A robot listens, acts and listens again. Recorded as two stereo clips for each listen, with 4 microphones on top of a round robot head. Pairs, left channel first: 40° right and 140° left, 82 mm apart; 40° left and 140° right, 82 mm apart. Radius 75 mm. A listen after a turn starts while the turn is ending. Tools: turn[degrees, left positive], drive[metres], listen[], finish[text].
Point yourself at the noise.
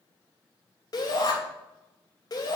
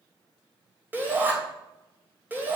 Thought: The shout: 75° right.
Action: turn[-75]
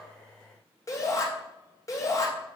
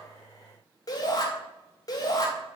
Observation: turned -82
Action: finish[Found it: a shout, straight ahead, 2 to 4 m away.]